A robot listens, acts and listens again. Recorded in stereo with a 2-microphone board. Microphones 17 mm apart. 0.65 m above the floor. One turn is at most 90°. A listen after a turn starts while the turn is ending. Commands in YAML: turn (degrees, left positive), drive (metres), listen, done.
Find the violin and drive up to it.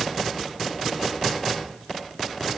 listen: true
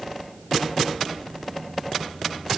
listen: true
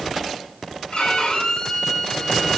turn: 75
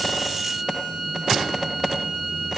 drive: 1.0
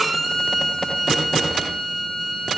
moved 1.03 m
drive: 1.0
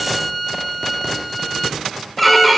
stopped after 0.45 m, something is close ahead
done: "Arrived at the violin, straight ahead."